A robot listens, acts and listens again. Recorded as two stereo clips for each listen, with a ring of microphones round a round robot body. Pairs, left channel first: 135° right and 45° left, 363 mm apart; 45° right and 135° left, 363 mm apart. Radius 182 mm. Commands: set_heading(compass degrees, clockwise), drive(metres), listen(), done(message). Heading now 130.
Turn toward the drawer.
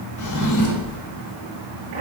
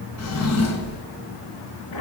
set_heading(225)
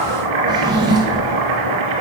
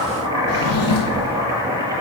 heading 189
set_heading(224)
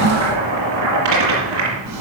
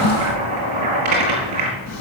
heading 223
done("Found it: a drawer, straight ahead, 2 to 4 m away.")